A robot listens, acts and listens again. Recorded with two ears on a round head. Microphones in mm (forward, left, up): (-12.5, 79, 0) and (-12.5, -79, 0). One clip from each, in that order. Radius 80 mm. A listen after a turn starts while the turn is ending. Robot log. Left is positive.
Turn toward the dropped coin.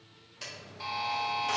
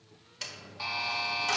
note: The dropped coin: about 30° right or 150° right.
cmd yaw -30
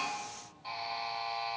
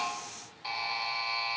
cmd idle
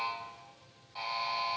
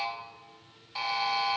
end: I heard a dropped coin, but can't make it out now. It was about straight ahead or 120° right.